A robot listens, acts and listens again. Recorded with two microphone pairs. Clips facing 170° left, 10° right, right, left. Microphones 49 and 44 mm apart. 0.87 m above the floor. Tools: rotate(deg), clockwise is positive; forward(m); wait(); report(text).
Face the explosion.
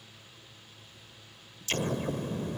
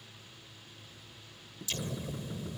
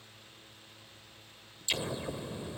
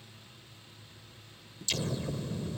rotate(160)
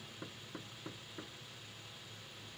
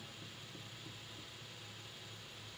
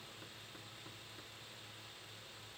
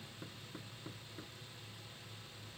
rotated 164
report("I heard an explosion from this way, but can't make it out now.")